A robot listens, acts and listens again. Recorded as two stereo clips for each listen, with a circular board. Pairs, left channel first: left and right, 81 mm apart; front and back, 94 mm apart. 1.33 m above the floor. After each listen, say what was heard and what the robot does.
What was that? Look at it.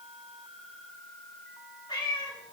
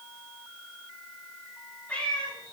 The cat meowing: 75° left. Turn 75° left.
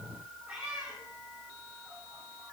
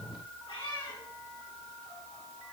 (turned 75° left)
The cat meowing is now 15° right. Turn 15° right.
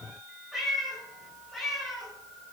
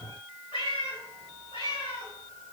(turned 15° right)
Facing the cat meowing, over 4 m away.